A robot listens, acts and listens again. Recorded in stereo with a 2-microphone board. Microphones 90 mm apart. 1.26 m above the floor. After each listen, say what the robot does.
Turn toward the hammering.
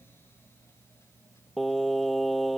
Keep listening.
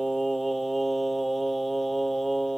Keep listening.
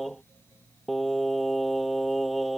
I can't make out hammering, only singing.